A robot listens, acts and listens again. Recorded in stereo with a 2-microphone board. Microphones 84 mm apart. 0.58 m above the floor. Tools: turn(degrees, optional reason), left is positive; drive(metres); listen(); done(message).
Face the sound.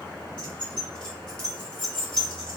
turn(degrees=70, reason="The keys jangling: about 70° left or 110° left.")
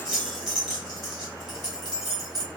done("Facing the keys jangling, 1 to 2 m away.")